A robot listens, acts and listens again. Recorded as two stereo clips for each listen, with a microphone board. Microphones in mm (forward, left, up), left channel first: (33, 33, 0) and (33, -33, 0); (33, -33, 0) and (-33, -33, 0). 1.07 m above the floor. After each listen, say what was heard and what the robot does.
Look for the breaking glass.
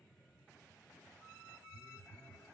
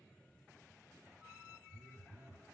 Keep listening.
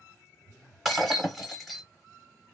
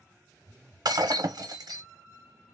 The breaking glass: straight behind. Turn 180° left.
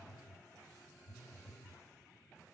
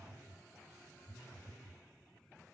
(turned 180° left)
I heard breaking glass from this way, but can't make it out now.